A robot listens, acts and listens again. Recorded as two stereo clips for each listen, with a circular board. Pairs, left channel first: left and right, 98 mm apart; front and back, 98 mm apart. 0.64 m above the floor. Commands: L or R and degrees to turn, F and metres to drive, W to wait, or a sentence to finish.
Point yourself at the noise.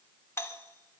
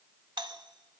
L150
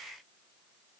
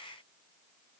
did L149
W
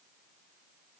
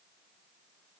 W
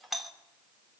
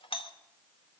Facing the doorbell.